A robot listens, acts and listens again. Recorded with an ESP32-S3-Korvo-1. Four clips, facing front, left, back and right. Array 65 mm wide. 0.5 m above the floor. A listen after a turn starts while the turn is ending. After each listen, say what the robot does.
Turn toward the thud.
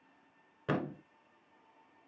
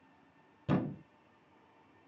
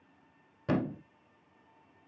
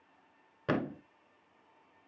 Turn 70° right.
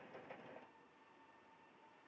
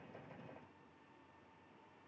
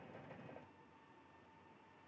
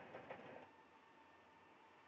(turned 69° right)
I heard a thud from this way, but can't make it out now.